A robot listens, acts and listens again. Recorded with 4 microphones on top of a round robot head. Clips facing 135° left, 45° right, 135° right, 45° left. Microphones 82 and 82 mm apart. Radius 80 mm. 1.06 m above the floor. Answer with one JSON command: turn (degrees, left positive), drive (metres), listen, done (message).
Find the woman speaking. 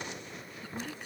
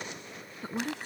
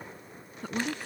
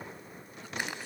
{"turn": -100}
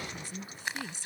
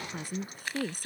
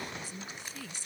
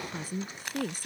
{"done": "Facing the woman speaking."}